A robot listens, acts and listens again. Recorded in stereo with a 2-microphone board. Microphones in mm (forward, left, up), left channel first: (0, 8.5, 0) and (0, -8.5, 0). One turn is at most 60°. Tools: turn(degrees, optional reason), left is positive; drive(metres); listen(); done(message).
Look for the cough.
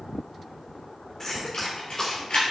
turn(degrees=25, reason="The cough: about 25° left or 155° left.")
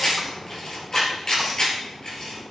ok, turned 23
listen()
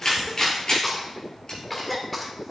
done("Facing the cough, 1 to 2 m away.")